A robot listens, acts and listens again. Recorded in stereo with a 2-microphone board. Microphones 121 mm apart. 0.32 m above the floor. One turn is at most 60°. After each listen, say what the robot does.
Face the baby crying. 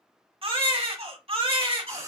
Turn 50° right.
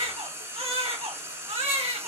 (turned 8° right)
Turn 55° right.
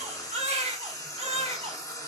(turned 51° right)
Turn 60° right.
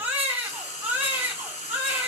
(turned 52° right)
Turn 20° right.
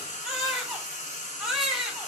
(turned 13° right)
Facing the baby crying.